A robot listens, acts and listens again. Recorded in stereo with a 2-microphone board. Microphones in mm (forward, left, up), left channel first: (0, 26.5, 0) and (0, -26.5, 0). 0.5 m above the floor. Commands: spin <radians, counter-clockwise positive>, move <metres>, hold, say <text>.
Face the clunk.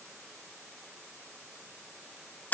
hold
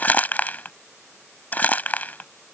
hold
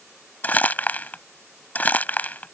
say I can't make out a clunk, only crumpling.